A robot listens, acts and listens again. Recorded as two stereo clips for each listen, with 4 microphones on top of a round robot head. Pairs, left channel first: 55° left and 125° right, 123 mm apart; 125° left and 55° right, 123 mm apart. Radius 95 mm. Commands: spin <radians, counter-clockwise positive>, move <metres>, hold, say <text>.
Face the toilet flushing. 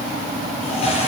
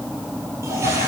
spin 0.26
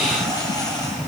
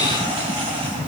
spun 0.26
say Found it: a toilet flushing, straight ahead.